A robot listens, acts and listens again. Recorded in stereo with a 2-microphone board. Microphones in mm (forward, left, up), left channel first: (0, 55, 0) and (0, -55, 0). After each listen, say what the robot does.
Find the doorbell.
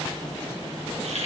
Keep listening.
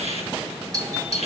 Turn 30° right.
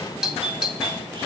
Facing the doorbell, 2 to 4 m away.